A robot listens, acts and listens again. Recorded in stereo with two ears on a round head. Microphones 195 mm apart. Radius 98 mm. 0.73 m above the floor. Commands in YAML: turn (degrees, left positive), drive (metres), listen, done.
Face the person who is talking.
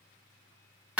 listen: true
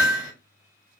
listen: true
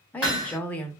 turn: 30
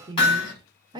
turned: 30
turn: -25
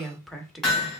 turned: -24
done: "Facing the woman speaking, under 1 m away."